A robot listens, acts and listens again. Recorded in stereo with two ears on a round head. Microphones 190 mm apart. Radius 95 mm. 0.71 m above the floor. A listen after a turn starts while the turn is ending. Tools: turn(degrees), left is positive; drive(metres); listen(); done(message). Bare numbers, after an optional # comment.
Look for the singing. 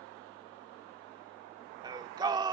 # The singing: about 20° right or 160° right.
turn(-20)
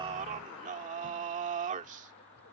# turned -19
# So it is at 145° right.
turn(-145)
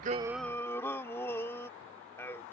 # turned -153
# The singing is now 10° left.
turn(10)
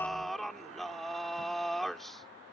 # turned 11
done("Found it: singing, straight ahead.")